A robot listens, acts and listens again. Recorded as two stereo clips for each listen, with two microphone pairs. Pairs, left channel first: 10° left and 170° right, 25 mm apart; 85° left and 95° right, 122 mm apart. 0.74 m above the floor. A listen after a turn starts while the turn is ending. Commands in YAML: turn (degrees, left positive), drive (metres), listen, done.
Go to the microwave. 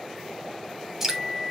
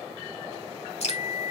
turn: 80
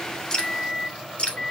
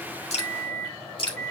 turn: 10
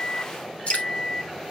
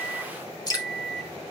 drive: 1.0
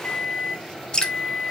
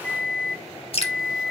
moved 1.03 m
drive: 1.0
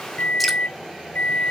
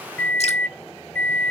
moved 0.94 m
turn: 10
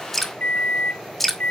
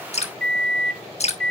drive: 1.0
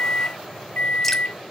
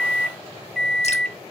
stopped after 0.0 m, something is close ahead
done: "Arrived at the microwave, straight ahead."